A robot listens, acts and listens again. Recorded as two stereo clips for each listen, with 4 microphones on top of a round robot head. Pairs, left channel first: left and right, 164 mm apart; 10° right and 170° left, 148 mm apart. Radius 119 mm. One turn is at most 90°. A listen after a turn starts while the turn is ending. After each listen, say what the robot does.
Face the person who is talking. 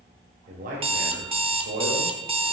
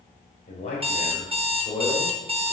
Turn 75° right.
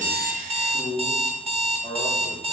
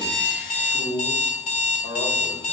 Turn 10° right.
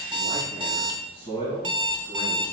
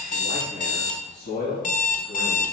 Turn 20° right.
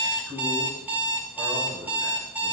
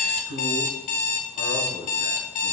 Facing the man speaking.